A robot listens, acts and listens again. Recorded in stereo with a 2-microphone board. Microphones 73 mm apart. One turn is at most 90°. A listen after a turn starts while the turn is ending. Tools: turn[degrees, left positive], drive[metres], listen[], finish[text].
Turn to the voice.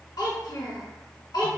Thought: The child speaking: about 75° left or 105° left.
Action: turn[75]
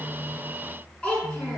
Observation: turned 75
Thought: So it is at 20° left.
Action: turn[20]
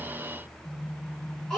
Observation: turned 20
Action: finish[Facing the child speaking.]